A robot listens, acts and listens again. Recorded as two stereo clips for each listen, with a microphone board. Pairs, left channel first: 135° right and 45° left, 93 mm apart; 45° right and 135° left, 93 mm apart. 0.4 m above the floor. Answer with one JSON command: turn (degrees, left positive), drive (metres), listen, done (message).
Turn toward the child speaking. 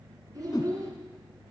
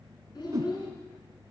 {"done": "Found it: a child speaking, straight ahead."}